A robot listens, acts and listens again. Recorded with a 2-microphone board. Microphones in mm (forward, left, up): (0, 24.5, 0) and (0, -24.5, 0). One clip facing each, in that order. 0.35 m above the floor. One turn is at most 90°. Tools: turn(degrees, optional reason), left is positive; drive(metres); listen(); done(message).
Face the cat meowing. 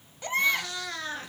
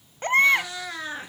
turn(degrees=-30)
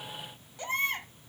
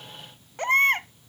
listen()
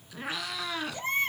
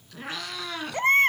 done("Facing the cat meowing, 1 to 2 m away.")